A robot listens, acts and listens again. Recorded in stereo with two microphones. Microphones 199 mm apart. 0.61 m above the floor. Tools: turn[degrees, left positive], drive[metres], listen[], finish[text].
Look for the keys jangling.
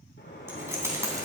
Thought: The keys jangling: about 15° right or 165° right.
Action: turn[-15]
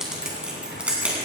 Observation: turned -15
Action: turn[-30]
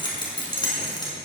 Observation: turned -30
Thought: So it is at 20° left.
Action: turn[20]
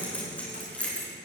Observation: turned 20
Action: finish[Found it: keys jangling, straight ahead, over 4 m away.]